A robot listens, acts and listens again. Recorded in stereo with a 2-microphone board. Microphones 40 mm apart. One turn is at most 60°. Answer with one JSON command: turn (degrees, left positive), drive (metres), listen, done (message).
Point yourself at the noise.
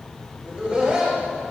{"turn": -20}
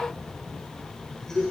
{"turn": 15}
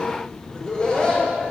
{"turn": 20}
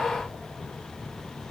{"listen": true}
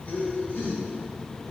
{"turn": 40}
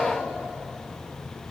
{"listen": true}
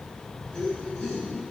{"turn": 15}
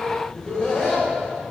{"turn": 10}
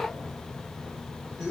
{"done": "Found it: laughter, straight ahead, 1 to 2 m away."}